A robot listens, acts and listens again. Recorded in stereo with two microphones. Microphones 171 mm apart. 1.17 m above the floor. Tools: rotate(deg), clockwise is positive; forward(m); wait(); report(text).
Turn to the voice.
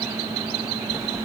wait()
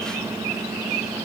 wait()
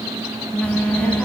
rotate(-30)
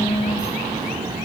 rotate(25)
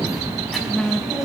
report("Found it: a child speaking, straight ahead, over 4 m away.")